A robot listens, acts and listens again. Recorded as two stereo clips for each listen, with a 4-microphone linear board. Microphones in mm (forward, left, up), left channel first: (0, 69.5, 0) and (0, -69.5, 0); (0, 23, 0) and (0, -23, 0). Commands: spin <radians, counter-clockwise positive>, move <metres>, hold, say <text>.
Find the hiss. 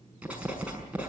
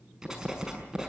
hold
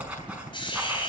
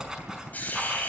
spin 0.61
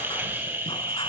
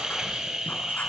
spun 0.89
spin -0.26
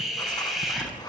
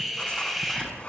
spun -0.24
say Facing the hiss, over 4 m away.